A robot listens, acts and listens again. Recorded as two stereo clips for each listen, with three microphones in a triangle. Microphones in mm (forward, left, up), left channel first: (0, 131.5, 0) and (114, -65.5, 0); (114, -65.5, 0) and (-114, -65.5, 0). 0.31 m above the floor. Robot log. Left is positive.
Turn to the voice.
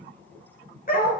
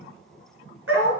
cmd idle
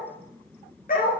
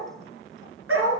cmd idle
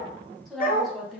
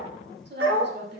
note: The woman speaking: 150° right.
cmd yaw -150
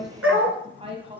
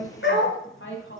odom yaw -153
end: Facing the woman speaking, 1 to 2 m away.